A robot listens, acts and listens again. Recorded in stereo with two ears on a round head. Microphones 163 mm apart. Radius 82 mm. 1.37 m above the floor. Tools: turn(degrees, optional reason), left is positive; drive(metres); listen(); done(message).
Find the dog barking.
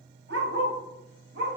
turn(degrees=-60, reason="The dog barking: about 60° right or 120° right.")
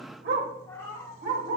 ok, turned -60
turn(degrees=-60, reason="So it is at 60° right.")
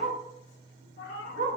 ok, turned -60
turn(degrees=-40, reason="The dog barking is now 40° right.")
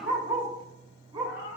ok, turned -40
turn(degrees=-20, reason="The dog barking is now 20° right.")
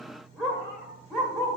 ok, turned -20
done("Facing the dog barking.")